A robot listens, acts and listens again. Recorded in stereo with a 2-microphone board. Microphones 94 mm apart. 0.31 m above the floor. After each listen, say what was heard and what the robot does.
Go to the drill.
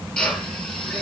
Turn 30° left.
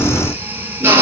So it is at 25° right. Turn 25° right.
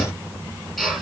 Drive 1.0 m forward.
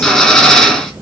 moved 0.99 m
Drive 1.0 m forward.
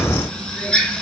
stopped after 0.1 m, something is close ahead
Blocked. The drill is further on, straight ahead.